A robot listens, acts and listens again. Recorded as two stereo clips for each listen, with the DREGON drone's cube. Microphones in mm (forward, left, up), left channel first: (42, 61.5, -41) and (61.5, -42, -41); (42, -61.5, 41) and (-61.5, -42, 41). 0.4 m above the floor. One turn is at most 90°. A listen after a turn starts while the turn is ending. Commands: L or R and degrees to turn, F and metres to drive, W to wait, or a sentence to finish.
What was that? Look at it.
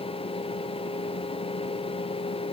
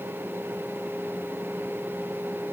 W
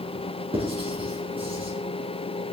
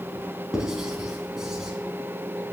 R90
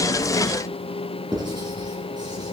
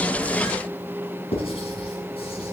R30
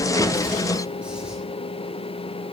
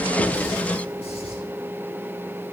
W
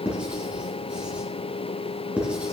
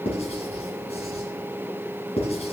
Found it: writing, straight ahead.